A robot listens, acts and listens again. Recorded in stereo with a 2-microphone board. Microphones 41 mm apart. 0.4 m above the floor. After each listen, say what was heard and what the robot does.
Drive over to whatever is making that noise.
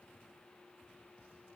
Keep listening.
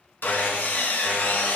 The sawing: about 55° left or 125° left. Turn 55° left.
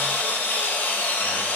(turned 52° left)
So it is at 70° left. Turn 70° left.
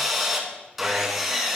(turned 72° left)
Drive 1.0 m forward.
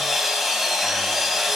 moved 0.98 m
Drive 1.0 m forward.
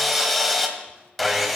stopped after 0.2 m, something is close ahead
I am next to the sawing.